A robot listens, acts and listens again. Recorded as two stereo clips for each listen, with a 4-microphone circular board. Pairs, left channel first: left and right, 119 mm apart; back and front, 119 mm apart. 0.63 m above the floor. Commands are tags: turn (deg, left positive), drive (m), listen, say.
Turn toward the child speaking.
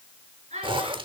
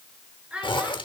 <turn deg="-80"/>
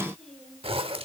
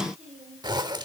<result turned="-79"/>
<listen/>
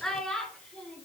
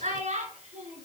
<turn deg="10"/>
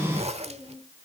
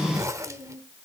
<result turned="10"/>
<listen/>
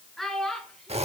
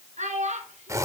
<say>Facing the child speaking.</say>